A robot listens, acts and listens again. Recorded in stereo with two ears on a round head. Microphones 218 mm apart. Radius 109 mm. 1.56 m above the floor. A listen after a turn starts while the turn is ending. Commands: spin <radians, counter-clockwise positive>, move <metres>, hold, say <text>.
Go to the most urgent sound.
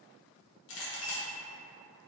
hold
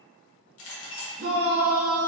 spin -0.79
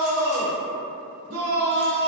spin -1.48
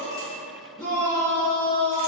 spin 0.26
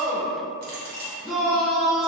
move 1.0
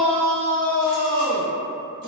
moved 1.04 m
spin 0.17
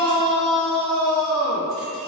move 1.0
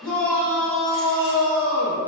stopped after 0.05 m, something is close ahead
say I am next to the shout.